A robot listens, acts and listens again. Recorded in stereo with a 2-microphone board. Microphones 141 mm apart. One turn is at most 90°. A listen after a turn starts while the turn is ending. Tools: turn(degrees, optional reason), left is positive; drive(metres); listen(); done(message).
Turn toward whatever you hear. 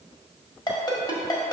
turn(degrees=30, reason="The ringtone: about 30° left or 150° left.")
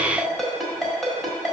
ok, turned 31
done("Found it: a ringtone, straight ahead.")